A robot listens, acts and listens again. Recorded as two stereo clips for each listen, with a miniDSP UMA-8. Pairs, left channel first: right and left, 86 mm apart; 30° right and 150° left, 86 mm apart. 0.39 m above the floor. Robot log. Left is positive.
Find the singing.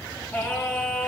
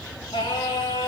note: The singing: 20° right.
cmd yaw -20
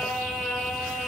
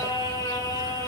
end: Found it: singing, straight ahead, 2 to 4 m away.